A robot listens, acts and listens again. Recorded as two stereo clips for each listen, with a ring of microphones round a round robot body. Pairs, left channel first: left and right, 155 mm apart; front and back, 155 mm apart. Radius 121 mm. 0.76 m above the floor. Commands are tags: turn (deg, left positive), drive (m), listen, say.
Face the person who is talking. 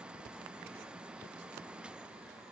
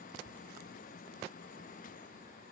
<listen/>
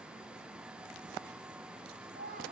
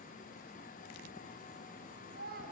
<turn deg="-140"/>
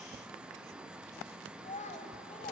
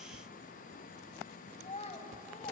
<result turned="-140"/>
<turn deg="45"/>
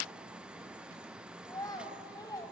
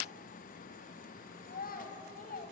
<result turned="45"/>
<turn deg="25"/>
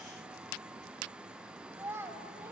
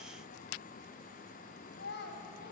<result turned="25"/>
<turn deg="-15"/>
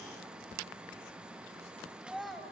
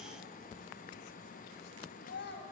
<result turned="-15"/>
<say>Facing the child speaking, 2 to 4 m away.</say>